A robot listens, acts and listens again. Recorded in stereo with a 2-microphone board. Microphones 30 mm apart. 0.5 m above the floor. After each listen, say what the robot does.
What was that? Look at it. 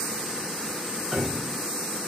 Turn 30° right.
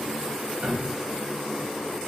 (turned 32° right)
Turn 115° right.
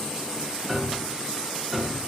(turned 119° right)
Facing the piano, 1 to 2 m away.